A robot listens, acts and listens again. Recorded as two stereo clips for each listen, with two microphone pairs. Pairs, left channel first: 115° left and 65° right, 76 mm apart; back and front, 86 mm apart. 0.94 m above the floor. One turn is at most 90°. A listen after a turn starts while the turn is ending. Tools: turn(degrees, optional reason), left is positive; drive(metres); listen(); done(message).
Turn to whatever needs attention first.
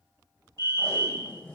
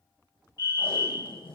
turn(degrees=-50, reason="The fire alarm: 50° right.")
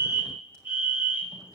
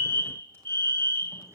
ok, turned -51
done("Facing the fire alarm.")